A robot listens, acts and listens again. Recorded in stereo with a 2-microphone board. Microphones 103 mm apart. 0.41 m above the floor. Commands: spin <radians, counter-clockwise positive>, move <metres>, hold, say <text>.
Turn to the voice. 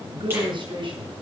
spin -0.96
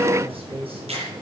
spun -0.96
spin -1.13
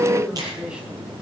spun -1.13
spin -0.17
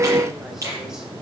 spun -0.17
hold
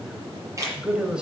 spin -0.17
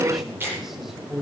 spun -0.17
say Found it: a man speaking, straight ahead, 2 to 4 m away.